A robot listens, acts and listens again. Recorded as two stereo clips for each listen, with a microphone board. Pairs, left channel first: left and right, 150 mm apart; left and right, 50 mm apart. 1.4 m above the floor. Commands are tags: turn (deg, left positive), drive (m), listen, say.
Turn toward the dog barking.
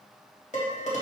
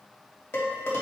<listen/>
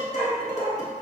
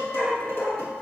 <turn deg="-30"/>
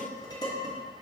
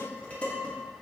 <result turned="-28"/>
<listen/>
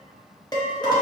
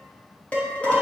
<listen/>
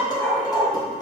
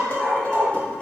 <turn deg="-145"/>
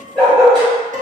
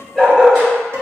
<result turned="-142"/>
<say>Found it: a dog barking, straight ahead.</say>